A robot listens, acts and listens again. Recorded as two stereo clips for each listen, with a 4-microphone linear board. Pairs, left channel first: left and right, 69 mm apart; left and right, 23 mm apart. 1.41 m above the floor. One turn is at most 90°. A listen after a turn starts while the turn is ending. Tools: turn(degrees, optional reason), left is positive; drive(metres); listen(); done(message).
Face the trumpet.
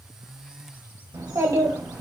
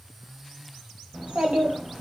listen()
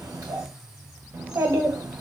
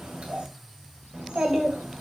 listen()
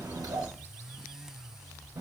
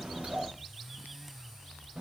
done("I can't make out a trumpet, only a child speaking.")